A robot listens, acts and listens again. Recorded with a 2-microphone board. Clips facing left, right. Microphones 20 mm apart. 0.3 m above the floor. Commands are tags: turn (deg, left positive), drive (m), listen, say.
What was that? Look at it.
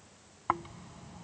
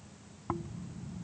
<turn deg="55"/>
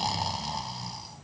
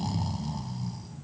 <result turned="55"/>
<turn deg="60"/>
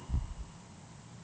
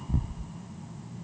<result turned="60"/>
<turn deg="-20"/>
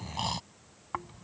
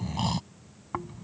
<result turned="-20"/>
<say>Found it: snoring, straight ahead.</say>